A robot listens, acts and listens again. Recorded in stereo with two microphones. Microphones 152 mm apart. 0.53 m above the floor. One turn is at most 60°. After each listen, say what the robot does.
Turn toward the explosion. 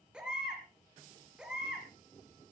Keep listening.
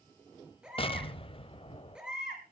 Turn 40° left.
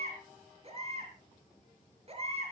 Keep listening.
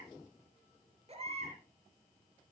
I heard an explosion, but can't make it out now. It was about straight ahead or 100° left.